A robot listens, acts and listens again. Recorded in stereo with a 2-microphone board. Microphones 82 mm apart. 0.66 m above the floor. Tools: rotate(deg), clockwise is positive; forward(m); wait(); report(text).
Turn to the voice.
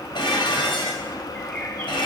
wait()
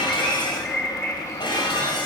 wait()
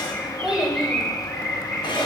rotate(30)
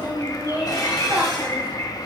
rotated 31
rotate(20)
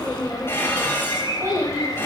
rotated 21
rotate(140)
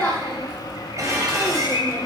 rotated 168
rotate(-25)
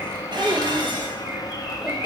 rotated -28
wait()
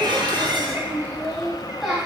report("Facing the child speaking.")